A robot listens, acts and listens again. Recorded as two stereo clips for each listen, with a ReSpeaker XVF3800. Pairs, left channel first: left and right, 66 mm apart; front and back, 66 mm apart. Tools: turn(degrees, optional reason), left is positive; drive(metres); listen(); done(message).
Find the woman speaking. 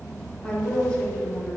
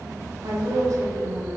turn(degrees=150, reason="The woman speaking: 150° left.")
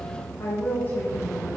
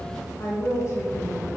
turn(degrees=30, reason="The woman speaking is now 30° left.")
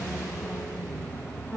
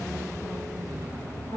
turn(degrees=-15, reason="The woman speaking is now 15° right.")
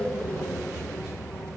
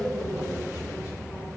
done("Facing the woman speaking.")